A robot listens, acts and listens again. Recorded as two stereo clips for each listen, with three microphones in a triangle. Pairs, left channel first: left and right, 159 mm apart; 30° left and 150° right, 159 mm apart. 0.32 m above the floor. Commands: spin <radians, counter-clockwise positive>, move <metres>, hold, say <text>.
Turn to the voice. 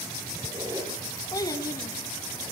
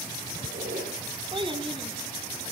spin 2.71
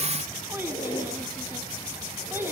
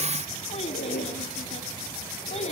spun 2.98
spin -0.26
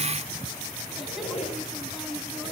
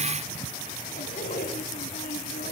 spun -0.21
hold
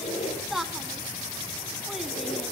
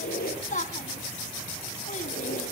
say Found it: a child speaking, straight ahead.